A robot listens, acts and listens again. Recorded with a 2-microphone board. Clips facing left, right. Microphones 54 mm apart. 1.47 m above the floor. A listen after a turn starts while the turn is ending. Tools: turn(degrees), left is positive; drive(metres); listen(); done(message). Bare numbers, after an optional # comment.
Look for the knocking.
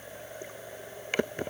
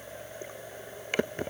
listen()
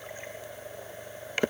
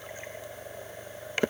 listen()
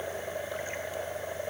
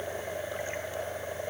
done("I can't make out knocking.")